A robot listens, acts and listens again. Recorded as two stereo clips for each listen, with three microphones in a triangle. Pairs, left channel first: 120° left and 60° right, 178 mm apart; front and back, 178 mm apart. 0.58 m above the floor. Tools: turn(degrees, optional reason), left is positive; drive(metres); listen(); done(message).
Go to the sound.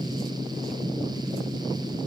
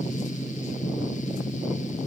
listen()
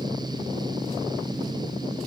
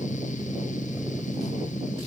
listen()
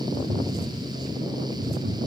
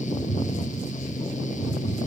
turn(degrees=-60, reason="The tapping: 60° right.")
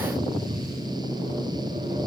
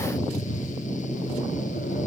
listen()
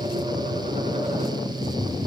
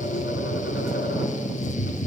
drive(metres=1.0)
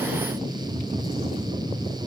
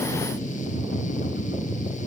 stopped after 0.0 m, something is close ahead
done("Blocked. The tapping is further on, straight ahead.")